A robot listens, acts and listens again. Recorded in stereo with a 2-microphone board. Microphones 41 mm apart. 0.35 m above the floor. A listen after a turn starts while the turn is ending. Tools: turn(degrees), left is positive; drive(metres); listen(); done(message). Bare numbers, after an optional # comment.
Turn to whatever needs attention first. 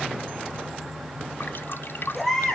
turn(30)
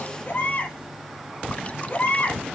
# So it is at 140° left.
turn(140)
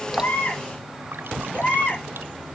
# The baby crying is now 35° left.
turn(35)
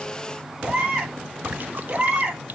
# The baby crying is now 20° right.
turn(-20)
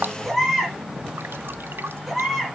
done("Facing the baby crying.")